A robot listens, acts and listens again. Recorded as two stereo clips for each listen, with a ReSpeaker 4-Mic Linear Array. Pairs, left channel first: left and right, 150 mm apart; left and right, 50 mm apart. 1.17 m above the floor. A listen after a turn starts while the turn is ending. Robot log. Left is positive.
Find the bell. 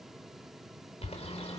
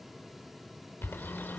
cmd idle
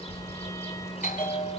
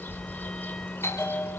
note: The bell: about 65° left or 115° left.
cmd yaw +65
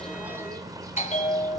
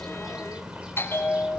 note: So it is at 50° left.
cmd yaw +50
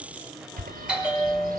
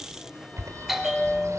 end: Facing the bell.